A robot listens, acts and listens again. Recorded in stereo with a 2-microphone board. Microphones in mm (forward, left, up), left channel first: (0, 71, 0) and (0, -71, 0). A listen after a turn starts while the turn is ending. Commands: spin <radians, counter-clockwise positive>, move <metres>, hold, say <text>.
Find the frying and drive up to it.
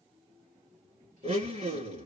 hold
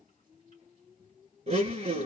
hold
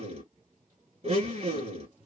say I can't make out frying to turn to.